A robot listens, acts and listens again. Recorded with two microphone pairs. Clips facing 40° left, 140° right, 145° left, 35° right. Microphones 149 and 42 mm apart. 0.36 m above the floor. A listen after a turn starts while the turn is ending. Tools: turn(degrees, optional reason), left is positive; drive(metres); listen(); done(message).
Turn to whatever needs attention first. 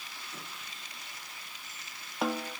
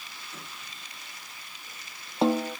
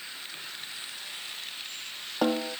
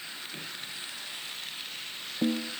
listen()
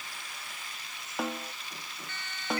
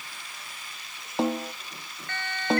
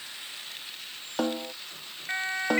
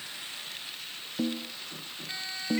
turn(degrees=-165, reason="The siren: 165° right.")
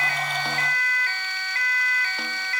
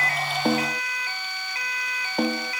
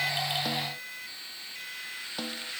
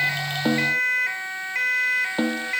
turn(degrees=-65, reason="The siren is now 65° right.")
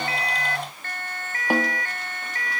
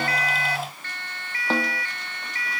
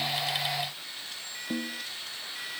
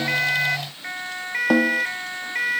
done("Found it: a siren, straight ahead.")